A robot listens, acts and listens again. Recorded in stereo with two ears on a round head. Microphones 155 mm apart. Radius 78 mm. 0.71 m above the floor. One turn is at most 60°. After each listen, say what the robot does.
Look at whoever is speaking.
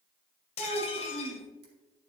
Turn 30° right.
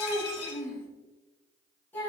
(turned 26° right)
Turn 10° left.
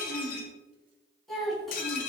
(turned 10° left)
Facing the child speaking.